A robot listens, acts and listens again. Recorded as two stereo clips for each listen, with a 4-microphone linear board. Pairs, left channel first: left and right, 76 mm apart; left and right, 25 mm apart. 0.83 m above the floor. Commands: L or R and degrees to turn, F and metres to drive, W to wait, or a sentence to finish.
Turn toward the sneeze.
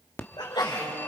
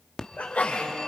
L75
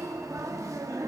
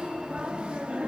W
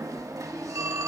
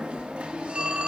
I heard a sneeze, but can't make it out now. It was about straight ahead or 30° left.